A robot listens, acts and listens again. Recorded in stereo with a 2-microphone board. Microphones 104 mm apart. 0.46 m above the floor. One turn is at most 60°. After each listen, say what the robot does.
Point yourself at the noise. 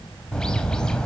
Turn 30° left.
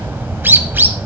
Turn 20° right.
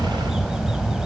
Found it: a bird, straight ahead, under 1 m away.